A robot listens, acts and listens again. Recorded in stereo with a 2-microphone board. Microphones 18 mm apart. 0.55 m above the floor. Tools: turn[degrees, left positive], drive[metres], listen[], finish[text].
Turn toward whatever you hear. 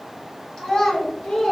Thought: The child speaking: about 55° left or 125° left.
Action: turn[55]
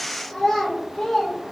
Thought: So it is at 30° left.
Action: turn[30]
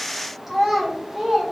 Thought: The child speaking is now 15° right.
Action: turn[-15]
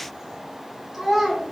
Thought: The child speaking is now 15° right.
Action: turn[-15]
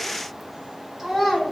Action: finish[Facing the child speaking, 2 to 4 m away.]